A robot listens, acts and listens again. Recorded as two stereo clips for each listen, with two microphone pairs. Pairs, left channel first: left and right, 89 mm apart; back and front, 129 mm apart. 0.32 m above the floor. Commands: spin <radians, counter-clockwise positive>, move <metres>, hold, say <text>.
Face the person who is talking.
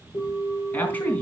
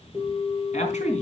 spin 2.79
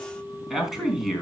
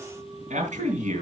say Facing the man speaking, 2 to 4 m away.